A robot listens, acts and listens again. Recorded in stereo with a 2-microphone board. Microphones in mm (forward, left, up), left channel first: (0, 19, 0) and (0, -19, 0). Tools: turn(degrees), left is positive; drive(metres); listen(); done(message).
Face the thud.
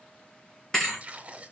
turn(degrees=30)
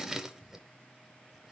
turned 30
listen()
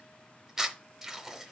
done("I heard a thud, but can't make it out now. It was about 20° right or 140° left.")